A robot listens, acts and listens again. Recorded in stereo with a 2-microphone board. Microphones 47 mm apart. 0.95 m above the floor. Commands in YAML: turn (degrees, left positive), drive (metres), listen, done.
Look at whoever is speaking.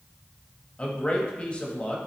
turn: 30
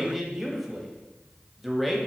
done: "Found it: a man speaking, straight ahead, 1 to 2 m away."